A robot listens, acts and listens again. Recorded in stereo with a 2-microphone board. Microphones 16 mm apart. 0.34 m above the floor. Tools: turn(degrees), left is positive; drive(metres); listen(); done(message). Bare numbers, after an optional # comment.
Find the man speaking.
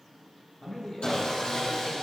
# The man speaking: about 30° left or 150° left.
turn(30)
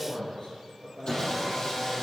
# So it is at 135° left.
turn(135)
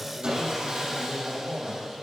done("Facing the man speaking, over 4 m away.")